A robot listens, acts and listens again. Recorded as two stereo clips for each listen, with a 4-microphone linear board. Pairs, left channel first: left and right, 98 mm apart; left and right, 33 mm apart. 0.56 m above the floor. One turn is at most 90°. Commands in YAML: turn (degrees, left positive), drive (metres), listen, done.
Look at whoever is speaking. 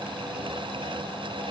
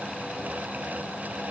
listen: true
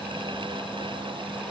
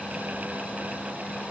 listen: true
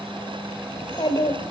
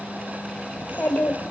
turn: 50
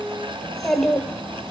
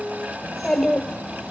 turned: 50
done: "Facing the child speaking, 1 to 2 m away."